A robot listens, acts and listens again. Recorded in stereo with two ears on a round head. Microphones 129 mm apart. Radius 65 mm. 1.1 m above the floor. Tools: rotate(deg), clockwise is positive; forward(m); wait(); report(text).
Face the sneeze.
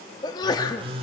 rotate(-30)
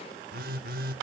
wait()
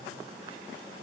report("I heard a sneeze, but can't make it out now. It was about straight ahead or 120° left.")